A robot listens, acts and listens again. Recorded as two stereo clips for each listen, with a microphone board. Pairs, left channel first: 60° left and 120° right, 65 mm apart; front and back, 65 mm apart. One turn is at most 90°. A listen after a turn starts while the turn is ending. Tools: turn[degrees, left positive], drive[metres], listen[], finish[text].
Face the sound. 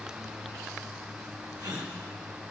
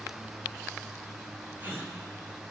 Thought: The gasp: 125° right.
Action: turn[-90]
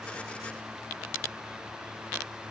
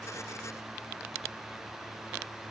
Thought: Nothing new. It was at 35° right.
Action: turn[-35]
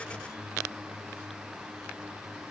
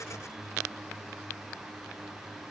Action: finish[I heard a gasp from this way, but can't make it out now.]